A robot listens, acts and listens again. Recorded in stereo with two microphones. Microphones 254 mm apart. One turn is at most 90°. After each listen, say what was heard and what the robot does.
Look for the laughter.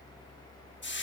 Keep listening.
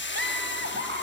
The laughter: about 45° right or 135° right. Turn 45° right.
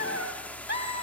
So it is at 80° right. Turn 80° right.
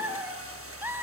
The laughter is now 10° right. Turn 10° right.
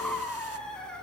Found it: laughter, straight ahead, over 4 m away.